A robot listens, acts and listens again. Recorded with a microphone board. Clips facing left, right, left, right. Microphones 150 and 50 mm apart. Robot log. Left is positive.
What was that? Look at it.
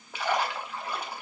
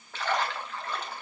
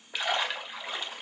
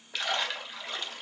cmd yaw +30
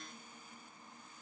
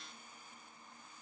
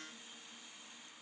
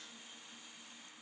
cmd idle
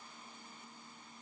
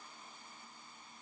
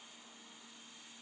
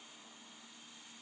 end: I heard a splash, but can't make it out now. It was about 20° right or 140° left.